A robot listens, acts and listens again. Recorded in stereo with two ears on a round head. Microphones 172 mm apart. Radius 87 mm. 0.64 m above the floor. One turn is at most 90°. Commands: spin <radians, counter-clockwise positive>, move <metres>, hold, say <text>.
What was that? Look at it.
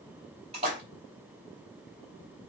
spin -0.52
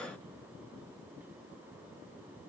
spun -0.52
hold
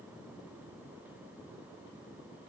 say I heard a splash, but can't make it out now. It was about straight ahead or 120° right.